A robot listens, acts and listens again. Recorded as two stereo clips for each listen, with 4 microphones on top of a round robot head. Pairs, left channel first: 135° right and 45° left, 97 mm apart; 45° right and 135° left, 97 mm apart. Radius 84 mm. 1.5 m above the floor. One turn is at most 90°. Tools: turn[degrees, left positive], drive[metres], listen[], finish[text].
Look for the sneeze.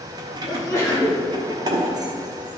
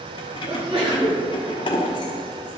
Thought: The sneeze: 160° left.
Action: turn[90]
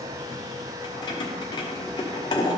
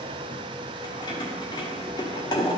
Thought: Nothing new. It was at 70° left.
Action: turn[70]
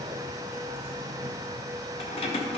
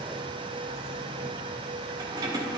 Action: finish[Facing where the sneeze came from. I can't hear it now.]